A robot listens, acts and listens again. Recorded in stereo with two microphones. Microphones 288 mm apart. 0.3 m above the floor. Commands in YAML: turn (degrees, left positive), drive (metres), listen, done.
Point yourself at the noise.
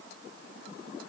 listen: true
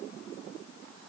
listen: true
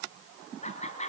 turn: 25
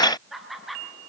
done: "Facing the laughter."